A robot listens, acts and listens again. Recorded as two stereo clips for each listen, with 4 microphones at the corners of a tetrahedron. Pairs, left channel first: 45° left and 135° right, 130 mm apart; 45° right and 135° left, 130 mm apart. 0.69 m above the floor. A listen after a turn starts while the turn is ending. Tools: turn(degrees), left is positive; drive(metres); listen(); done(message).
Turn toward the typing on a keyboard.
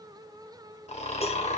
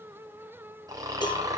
listen()
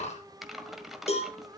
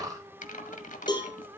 turn(degrees=-45)
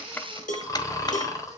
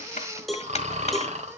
listen()
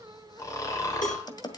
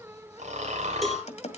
turn(degrees=-10)
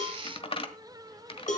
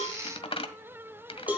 done("Found it: typing on a keyboard, straight ahead, 1 to 2 m away.")